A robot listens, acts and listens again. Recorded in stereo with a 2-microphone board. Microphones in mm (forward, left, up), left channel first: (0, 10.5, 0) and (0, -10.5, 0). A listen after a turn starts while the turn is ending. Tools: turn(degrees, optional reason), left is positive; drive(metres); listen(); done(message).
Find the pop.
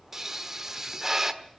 turn(degrees=-20, reason="The pop: about 20° right or 160° right.")
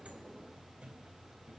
listen()
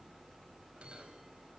done("I heard a pop, but can't make it out now. It was about straight ahead or 140° right.")